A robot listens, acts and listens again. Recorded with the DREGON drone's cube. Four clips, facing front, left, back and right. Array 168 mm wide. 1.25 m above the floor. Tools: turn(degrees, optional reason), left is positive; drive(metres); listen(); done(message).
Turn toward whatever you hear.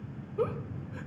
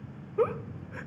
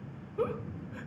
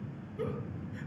turn(degrees=80, reason="The giggle: 80° left.")
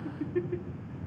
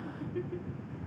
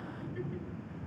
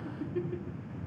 done("Facing the giggle.")